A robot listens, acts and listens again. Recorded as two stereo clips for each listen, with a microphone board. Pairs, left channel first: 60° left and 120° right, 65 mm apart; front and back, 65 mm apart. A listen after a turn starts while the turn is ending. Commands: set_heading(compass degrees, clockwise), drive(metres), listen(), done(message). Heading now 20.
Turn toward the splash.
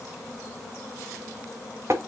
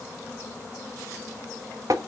listen()
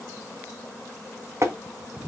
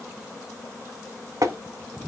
listen()
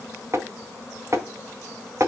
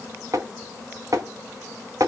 done("I can't make out a splash, only tapping.")